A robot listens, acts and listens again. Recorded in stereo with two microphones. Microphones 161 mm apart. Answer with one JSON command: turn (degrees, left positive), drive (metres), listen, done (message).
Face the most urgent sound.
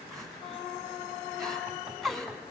{"turn": 30}
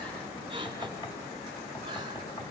{"turn": -30}
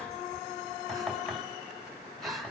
{"done": "Found it: crying, straight ahead, 2 to 4 m away."}